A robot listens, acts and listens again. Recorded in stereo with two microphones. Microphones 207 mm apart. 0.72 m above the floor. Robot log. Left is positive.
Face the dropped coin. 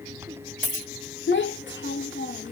note: The dropped coin: about 40° right or 140° right.
cmd yaw -40
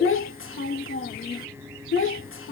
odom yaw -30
cmd idle
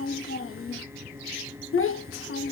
end: I heard a dropped coin, but can't make it out now. It was about 10° right or 110° right.